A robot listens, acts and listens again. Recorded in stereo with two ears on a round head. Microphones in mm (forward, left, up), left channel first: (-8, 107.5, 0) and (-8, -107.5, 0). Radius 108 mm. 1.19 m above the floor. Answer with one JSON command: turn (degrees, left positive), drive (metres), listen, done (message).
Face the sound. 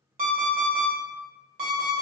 {"turn": -35}
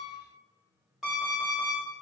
{"done": "Facing the alarm clock."}